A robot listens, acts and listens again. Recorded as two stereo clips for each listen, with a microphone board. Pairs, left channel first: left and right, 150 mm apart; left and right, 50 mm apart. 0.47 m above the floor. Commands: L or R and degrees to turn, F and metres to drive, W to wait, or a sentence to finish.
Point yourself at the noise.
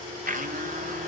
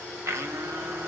R65
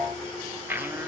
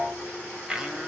R15
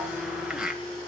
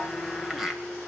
Found it: a blender, straight ahead, 2 to 4 m away.